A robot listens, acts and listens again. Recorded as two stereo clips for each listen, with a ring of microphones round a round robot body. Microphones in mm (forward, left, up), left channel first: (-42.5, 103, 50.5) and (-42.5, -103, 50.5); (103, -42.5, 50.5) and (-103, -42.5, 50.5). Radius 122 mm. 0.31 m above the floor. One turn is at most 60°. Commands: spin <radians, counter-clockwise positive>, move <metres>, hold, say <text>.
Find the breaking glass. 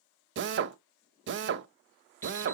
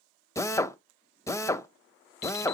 hold
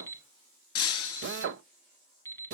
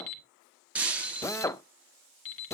spin 1.05
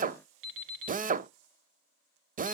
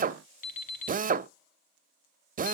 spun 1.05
spin 0.61
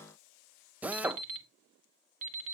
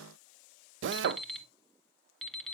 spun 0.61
say Facing where the breaking glass came from. I can't hear it now.